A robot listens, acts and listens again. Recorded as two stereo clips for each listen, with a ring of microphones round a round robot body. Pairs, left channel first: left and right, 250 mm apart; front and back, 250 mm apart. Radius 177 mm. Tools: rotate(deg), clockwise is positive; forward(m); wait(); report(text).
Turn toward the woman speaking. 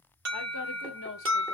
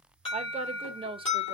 rotate(-115)
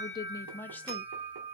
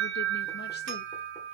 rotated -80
rotate(-35)
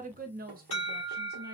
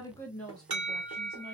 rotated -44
rotate(85)
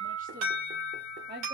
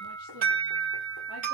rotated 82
rotate(50)
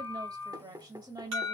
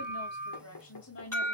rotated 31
rotate(20)
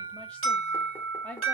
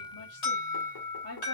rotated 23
report("Found it: a woman speaking, straight ahead.")